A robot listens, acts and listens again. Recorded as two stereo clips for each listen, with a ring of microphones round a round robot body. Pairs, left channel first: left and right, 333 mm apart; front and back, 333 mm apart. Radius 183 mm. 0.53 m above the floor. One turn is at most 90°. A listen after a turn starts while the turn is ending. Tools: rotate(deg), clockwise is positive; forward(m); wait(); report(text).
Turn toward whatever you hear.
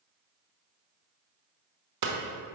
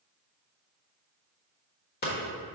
rotate(60)
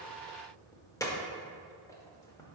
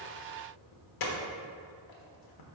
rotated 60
rotate(-10)
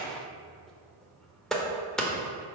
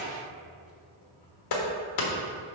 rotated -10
report("Facing the hammering.")